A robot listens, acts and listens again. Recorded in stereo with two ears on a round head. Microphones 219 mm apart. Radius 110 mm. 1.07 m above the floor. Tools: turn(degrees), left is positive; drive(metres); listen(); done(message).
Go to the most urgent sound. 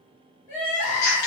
turn(degrees=30)
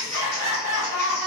turn(degrees=-15)
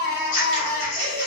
drive(metres=1.0)
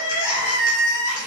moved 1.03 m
turn(degrees=-10)
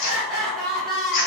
drive(metres=1.0)
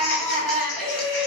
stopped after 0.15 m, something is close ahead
done("Arrived at the crying, straight ahead.")